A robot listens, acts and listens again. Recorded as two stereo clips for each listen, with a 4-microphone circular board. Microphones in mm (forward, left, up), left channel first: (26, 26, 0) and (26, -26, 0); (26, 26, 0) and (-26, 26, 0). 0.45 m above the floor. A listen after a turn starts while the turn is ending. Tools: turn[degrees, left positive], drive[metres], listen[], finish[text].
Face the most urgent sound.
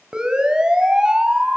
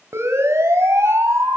Thought: The siren: 160° right.
Action: turn[-160]
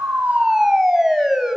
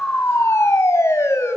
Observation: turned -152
Thought: The siren is now 10° right.
Action: turn[-10]
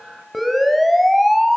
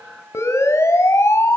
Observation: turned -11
Action: finish[Found it: a siren, straight ahead.]